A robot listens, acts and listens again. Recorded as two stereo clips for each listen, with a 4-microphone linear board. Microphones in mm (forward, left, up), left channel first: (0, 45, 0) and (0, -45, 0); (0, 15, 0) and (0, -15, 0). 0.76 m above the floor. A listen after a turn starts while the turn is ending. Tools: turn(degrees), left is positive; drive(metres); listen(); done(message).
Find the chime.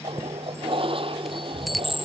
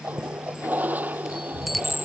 turn(degrees=30)
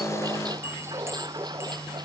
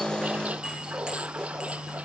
listen()
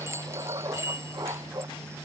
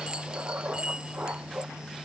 turn(degrees=-30)
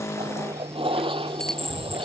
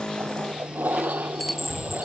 done("Facing the chime.")